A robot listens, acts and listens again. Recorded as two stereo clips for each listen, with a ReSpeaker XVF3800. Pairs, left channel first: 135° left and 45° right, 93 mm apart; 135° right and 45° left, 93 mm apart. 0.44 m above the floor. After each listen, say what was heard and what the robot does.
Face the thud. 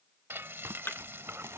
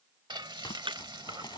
The thud: 65° left. Turn 65° left.
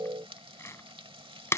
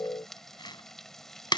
Facing where the thud came from. I can't hear it now.